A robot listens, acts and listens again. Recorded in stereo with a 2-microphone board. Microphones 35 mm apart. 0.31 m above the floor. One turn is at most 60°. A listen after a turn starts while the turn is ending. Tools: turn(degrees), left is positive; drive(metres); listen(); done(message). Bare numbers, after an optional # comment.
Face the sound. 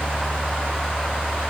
listen()
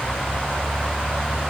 listen()
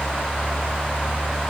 done("I can't make out anything.")